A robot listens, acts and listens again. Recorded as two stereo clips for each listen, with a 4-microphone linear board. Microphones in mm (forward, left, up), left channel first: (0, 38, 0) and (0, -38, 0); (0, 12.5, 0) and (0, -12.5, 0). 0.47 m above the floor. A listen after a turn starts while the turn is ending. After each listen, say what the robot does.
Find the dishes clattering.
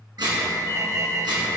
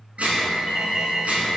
Turn 90° right.
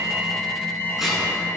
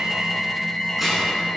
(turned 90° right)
Keep listening.
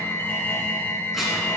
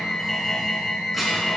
Keep listening.
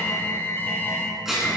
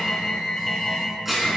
Facing the dishes clattering, 2 to 4 m away.